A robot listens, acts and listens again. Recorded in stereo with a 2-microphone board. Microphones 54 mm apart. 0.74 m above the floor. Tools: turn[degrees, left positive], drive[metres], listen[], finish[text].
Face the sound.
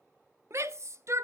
Thought: The shout: about 55° right or 125° right.
Action: turn[-55]
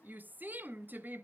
Thought: So it is at 40° right.
Action: turn[-40]
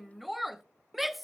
Action: finish[Facing the shout.]